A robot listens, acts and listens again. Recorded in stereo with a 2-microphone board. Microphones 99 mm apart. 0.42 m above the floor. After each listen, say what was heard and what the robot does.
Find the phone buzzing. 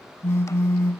The phone buzzing: about 25° left or 155° left. Turn 25° left.
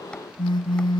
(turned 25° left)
So it is at 130° left. Turn 130° left.
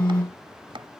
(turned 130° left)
The phone buzzing is now 10° left. Turn 10° left.
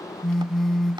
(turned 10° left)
Facing the phone buzzing.